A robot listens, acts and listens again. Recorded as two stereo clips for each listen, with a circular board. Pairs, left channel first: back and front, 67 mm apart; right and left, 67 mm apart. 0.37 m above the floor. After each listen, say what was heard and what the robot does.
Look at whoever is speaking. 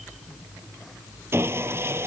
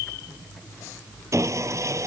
Keep listening.
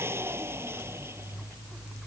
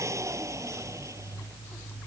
Keep listening.
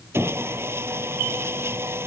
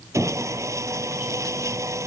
I can't make out anyone speaking, only sawing.